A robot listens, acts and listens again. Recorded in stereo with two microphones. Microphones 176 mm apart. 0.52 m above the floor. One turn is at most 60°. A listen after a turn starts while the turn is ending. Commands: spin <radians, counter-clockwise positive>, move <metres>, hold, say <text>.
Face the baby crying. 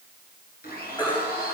spin 0.44
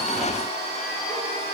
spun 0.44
hold
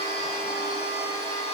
hold
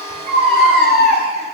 say Facing the baby crying.